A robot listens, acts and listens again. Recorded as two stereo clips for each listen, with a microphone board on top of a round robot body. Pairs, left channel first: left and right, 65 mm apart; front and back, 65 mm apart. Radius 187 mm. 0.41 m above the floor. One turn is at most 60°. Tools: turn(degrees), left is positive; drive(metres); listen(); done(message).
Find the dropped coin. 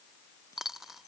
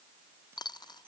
done("Found it: a dropped coin, straight ahead.")